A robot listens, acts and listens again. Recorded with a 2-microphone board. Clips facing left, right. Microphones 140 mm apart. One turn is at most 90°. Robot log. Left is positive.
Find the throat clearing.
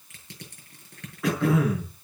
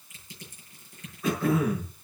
cmd yaw +90
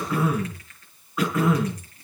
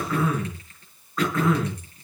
note: So it is at 10° left.
cmd yaw +10
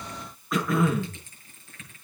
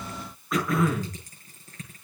end: Facing the throat clearing, over 4 m away.